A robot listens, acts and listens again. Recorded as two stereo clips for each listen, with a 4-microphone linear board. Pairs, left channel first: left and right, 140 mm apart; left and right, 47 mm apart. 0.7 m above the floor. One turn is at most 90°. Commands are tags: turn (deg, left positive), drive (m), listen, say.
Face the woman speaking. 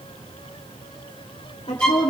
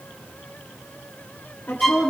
<turn deg="55"/>
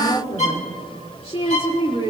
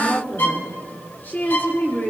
<turn deg="45"/>
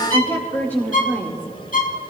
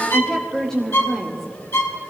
<turn deg="10"/>
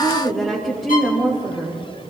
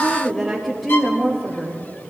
<say>Facing the woman speaking.</say>